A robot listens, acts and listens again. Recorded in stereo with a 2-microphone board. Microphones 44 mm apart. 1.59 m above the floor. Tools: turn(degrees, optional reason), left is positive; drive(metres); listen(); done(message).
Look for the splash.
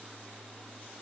listen()
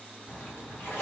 turn(degrees=55, reason="The splash: about 55° left or 125° left.")
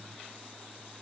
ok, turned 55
listen()
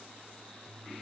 done("I heard a splash, but can't make it out now. It was about straight ahead or 70° left.")